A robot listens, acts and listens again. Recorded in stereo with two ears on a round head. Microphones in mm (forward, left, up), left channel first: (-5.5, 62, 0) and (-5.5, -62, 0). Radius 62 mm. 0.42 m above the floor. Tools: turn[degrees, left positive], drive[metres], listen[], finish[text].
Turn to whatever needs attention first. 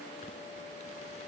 Action: listen[]
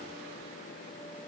Action: listen[]
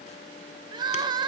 Thought: The crying: about 30° right or 150° right.
Action: turn[-30]
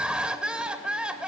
Thought: So it is at 10° right.
Action: turn[-10]
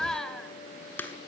Action: finish[Found it: crying, straight ahead, under 1 m away.]